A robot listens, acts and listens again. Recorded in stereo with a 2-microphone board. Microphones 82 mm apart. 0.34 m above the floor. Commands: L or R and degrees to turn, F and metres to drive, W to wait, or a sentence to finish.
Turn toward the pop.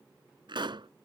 R70
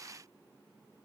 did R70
W
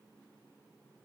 I heard a pop, but can't make it out now. It was about straight ahead or 40° right.